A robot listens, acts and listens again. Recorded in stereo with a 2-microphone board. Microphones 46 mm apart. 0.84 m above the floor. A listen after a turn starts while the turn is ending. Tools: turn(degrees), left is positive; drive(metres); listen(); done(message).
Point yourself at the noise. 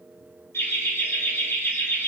turn(degrees=50)
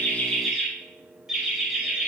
turn(degrees=-15)
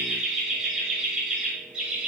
turn(degrees=-15)
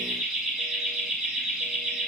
done("Found it: laughter, straight ahead, over 4 m away.")